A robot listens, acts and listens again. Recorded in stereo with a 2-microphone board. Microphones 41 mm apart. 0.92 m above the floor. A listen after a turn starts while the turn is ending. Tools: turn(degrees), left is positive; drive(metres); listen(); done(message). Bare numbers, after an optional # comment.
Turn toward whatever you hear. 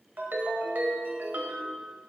# The ringtone: about 60° right or 120° right.
turn(-60)
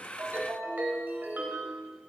# So it is at 55° right.
turn(-55)
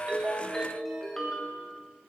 # The ringtone is now 15° left.
turn(15)
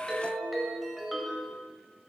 done("Found it: a ringtone, straight ahead.")